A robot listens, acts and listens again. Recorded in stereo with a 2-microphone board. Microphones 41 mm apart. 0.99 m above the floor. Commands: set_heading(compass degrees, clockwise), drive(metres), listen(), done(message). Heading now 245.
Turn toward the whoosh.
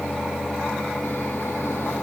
listen()
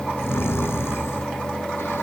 listen()
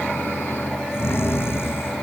done("I can't make out a whoosh, only snoring.")